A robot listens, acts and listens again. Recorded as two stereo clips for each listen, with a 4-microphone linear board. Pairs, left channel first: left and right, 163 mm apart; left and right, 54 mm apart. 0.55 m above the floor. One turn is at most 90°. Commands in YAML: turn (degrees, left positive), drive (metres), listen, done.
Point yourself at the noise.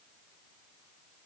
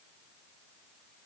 listen: true
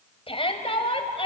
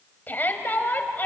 turn: 35
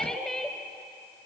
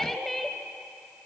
done: "Facing the shout."